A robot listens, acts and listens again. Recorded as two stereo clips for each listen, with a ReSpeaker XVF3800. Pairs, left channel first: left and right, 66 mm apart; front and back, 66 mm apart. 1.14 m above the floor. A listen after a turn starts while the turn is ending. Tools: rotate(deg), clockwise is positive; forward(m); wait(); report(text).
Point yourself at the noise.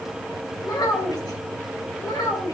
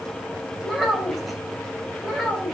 rotate(-90)
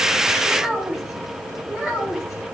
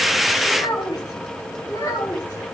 report("Found it: a child speaking, straight ahead.")